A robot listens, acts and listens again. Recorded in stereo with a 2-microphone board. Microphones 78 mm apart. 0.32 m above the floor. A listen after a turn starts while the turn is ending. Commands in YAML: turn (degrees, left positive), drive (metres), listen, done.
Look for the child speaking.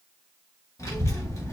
turn: 40
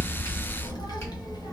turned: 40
turn: 90
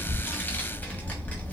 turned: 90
turn: 25
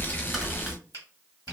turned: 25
done: "Facing the child speaking."